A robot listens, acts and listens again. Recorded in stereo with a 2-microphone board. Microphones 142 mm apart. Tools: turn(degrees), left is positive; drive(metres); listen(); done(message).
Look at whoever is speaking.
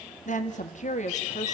turn(degrees=55)
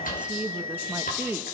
turn(degrees=-15)
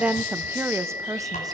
turn(degrees=-25)
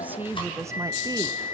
turn(degrees=-20)
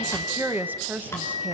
turn(degrees=-15)
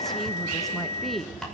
done("Found it: a woman speaking, straight ahead, 1 to 2 m away.")